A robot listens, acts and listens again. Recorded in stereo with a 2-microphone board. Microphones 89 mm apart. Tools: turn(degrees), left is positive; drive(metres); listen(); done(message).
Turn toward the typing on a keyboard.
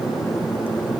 listen()
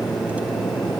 listen()
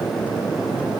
done("I can't make out typing on a keyboard to turn to.")